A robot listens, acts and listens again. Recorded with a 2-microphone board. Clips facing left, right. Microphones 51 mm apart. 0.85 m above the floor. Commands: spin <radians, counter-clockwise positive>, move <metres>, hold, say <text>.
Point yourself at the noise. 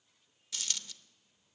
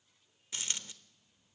spin -0.52
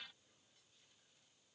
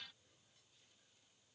hold
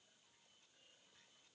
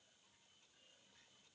say I heard a dropped coin, but can't make it out now. It was about straight ahead or 120° right.